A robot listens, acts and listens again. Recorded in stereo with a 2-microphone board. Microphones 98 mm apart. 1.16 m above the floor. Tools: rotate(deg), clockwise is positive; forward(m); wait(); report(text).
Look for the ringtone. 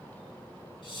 wait()
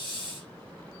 wait()
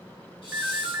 rotate(15)
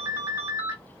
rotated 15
rotate(150)
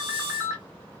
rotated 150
rotate(30)
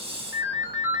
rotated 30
rotate(20)
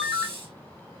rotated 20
report("Found it: a ringtone, straight ahead.")